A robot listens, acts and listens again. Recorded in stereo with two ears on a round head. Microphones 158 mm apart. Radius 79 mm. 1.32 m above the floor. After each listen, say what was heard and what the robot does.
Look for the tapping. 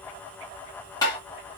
The tapping: about 20° left or 160° left. Turn 20° left.
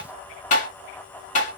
So it is at 140° left. Turn 140° left.
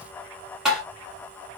Facing the tapping, 2 to 4 m away.